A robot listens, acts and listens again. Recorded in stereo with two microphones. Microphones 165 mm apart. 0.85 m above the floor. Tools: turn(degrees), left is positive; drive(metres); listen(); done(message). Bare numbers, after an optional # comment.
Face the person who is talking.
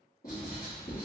listen()
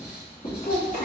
# The child speaking: about 55° left or 125° left.
turn(55)
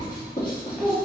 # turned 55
done("Facing the child speaking, 1 to 2 m away.")